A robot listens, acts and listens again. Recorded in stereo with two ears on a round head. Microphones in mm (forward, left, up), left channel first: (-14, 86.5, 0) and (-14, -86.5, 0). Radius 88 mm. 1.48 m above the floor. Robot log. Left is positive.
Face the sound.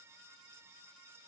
cmd idle
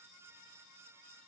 cmd idle
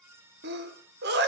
note: The sneeze: about 50° right or 130° right.
cmd yaw -50
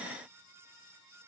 cmd idle
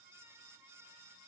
end: I heard a sneeze, but can't make it out now. It was about straight ahead or 80° right.